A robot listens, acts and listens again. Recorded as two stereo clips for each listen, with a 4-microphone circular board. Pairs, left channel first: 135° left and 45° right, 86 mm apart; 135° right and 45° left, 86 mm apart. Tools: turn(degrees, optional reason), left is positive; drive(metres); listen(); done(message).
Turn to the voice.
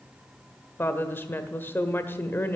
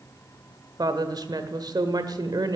turn(degrees=75, reason="The woman speaking: 75° left.")
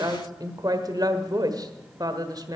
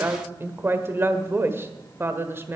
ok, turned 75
turn(degrees=-15, reason="The woman speaking is now 15° right.")
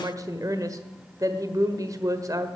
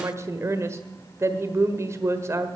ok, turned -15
done("Found it: a woman speaking, straight ahead, 1 to 2 m away.")